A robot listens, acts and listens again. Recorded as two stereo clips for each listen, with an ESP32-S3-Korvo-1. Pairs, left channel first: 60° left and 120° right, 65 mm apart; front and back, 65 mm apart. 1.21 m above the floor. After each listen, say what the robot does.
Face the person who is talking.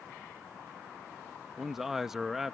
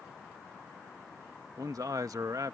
Turn 155° left.
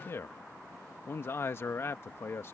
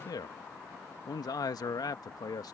Turn 10° left.
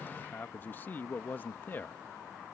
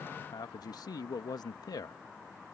Facing the man speaking.